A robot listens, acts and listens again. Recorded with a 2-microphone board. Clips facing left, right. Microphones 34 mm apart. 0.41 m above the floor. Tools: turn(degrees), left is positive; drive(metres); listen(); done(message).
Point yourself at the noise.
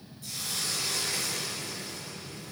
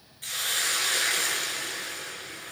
turn(degrees=-65)
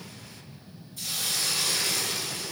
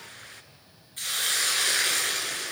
turn(degrees=-50)
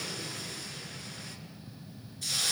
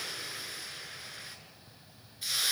turn(degrees=-15)
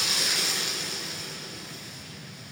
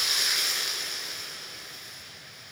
done("Facing the hiss, 2 to 4 m away.")